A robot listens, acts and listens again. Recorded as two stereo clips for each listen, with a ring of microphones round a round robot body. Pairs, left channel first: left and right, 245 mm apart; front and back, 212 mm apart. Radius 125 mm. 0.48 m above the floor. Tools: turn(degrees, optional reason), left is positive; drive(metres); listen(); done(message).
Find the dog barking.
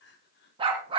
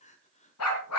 turn(degrees=-20, reason="The dog barking: 20° right.")
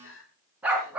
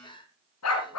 done("Found it: a dog barking, straight ahead, 2 to 4 m away.")